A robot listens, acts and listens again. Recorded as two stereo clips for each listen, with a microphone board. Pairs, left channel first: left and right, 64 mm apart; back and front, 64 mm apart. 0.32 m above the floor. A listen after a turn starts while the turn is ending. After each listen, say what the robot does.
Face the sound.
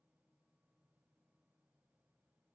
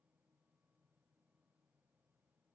Keep listening.
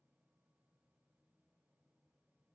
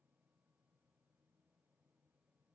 Keep listening.
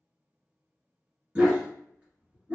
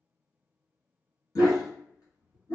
Turn 165° right.
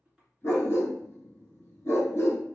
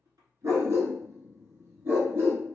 Turn 45° left.
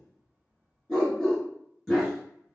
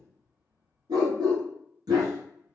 Found it: a dog barking, straight ahead.